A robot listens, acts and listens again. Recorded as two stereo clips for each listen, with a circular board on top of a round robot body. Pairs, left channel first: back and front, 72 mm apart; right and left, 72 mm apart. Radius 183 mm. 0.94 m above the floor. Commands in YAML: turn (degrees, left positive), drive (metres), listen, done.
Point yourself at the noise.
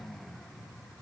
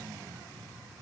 listen: true
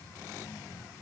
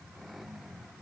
listen: true
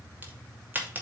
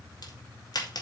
turn: -65
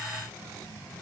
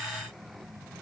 done: "I heard a crack from this way, but can't make it out now."